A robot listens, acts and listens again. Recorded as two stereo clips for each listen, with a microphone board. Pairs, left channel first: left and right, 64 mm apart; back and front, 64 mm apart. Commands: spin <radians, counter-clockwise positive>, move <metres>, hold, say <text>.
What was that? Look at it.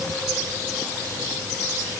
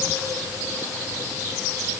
hold
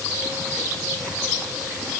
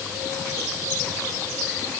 hold
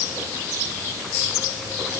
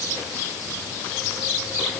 say I can't make out anything.